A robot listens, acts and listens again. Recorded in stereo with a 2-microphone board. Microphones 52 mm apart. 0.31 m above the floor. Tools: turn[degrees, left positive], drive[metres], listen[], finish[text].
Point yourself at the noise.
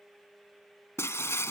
Thought: The breaking glass: about 60° left or 120° left.
Action: turn[60]
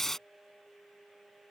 Action: finish[Facing the breaking glass.]